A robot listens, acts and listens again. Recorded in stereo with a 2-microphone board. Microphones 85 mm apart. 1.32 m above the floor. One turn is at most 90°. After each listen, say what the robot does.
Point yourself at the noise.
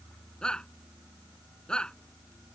Turn 30° left.
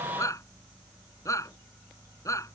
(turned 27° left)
Turn 90° left.
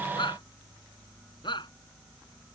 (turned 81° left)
Turn 60° left.
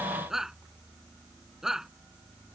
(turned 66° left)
Found it: a shout, straight ahead.